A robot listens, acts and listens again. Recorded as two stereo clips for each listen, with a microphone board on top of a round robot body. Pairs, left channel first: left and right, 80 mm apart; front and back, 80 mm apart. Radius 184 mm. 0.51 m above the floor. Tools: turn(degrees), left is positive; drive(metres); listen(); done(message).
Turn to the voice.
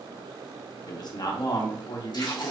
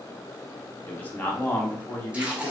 turn(degrees=65)
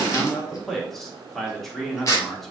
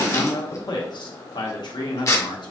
done("Facing the man speaking, 1 to 2 m away.")